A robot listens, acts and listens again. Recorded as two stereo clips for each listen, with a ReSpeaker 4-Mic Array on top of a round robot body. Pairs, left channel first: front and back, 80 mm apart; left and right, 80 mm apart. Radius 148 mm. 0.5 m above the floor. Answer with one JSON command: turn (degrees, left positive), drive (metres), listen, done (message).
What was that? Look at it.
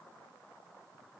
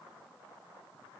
{"listen": true}
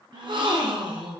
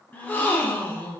{"turn": 160}
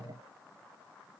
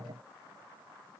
{"done": "I heard a gasp from this way, but can't make it out now."}